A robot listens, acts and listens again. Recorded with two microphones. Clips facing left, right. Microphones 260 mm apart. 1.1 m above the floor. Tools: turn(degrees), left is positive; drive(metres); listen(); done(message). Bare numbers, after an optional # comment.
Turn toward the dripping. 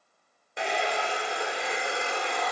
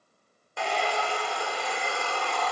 listen()
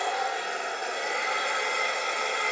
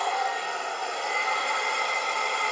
listen()
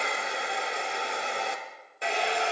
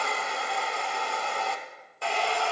done("I can't make out dripping, only a hair dryer.")